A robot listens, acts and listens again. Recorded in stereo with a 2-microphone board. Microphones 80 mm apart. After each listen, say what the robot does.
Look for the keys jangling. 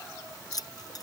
Turn 50° left.
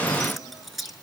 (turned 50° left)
Facing the keys jangling.